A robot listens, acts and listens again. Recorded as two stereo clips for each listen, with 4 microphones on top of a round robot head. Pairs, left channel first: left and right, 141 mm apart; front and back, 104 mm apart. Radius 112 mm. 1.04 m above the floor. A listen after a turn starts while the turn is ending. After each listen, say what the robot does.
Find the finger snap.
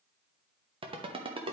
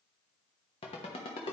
Keep listening.
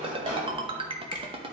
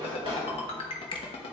Turn 35° left.
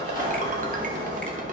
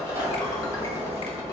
Keep listening.
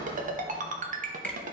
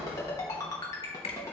Turn 10° left.
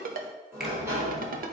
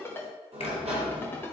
Keep listening.
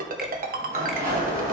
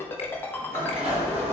Keep listening.
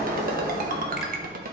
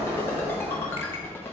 Facing where the finger snap came from. I can't hear it now.